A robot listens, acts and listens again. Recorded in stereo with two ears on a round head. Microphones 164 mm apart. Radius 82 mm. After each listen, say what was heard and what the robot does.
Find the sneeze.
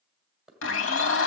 Keep listening.
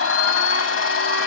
Keep listening.
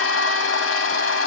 I can't make out a sneeze to turn to.